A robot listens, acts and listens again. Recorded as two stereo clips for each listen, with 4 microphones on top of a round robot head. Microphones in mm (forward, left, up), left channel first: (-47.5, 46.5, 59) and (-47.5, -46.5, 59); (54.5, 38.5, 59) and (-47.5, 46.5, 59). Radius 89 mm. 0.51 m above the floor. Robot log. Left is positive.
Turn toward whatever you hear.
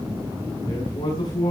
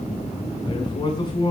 note: The man speaking: 40° left.
cmd yaw +40
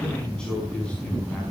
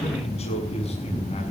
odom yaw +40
note: The man speaking is now 10° left.
cmd yaw +10
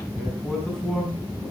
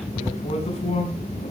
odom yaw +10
end: Facing the man speaking, over 4 m away.